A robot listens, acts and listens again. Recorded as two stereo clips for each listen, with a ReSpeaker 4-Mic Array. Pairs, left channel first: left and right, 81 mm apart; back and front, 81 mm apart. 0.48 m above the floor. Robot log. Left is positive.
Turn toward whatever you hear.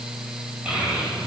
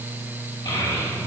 note: The child speaking: 165° right.
cmd yaw -165
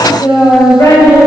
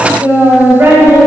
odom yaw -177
note: The child speaking is now 55° left.
cmd yaw +55
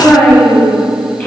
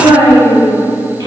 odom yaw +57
note: The child speaking is now 20° left.
cmd yaw +20
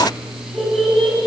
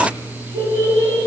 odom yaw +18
end: Found it: a child speaking, straight ahead.